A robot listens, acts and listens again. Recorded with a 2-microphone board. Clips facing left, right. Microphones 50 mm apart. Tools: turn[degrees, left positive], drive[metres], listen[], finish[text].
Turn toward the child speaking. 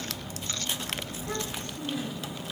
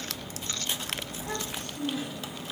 Thought: The child speaking: about 60° right or 120° right.
Action: turn[-60]
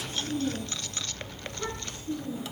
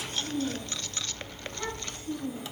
Thought: So it is at 55° right.
Action: turn[-55]
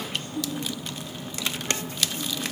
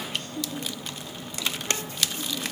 Thought: The child speaking is now 10° left.
Action: turn[10]
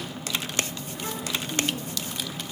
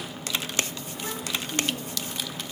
Action: listen[]
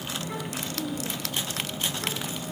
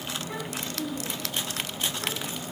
Action: listen[]
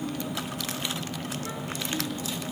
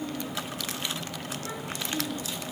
Action: finish[Facing where the child speaking came from. I can't hear it now.]